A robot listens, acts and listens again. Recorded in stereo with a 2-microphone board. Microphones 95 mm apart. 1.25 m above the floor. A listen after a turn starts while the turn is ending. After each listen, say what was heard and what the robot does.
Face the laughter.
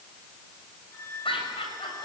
The laughter: about 70° left or 110° left. Turn 70° left.
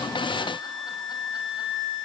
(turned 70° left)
Keep listening.
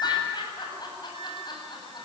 So it is at 50° left. Turn 50° left.
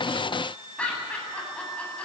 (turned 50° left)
The laughter is now 10° left. Turn 10° left.
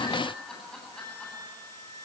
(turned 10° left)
Facing the laughter.